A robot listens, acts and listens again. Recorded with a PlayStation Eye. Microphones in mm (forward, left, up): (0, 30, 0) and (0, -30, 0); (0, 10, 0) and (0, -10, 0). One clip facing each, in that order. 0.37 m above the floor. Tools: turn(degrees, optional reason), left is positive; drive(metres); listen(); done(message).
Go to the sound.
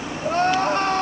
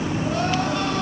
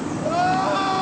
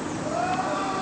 turn(degrees=45, reason="The crying: about 45° left or 135° left.")
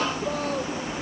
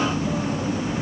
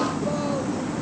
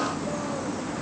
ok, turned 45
listen()
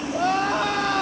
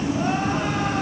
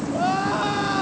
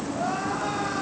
turn(degrees=85, reason="So it is at 85° left.")
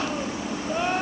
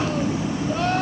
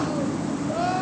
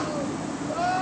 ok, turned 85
turn(degrees=10, reason="The crying is now 10° left.")
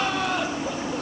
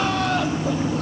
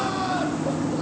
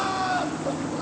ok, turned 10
drive(metres=1.0)
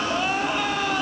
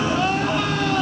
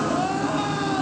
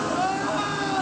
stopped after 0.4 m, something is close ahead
done("Something is in my way. I am facing the crying but have not reached it.")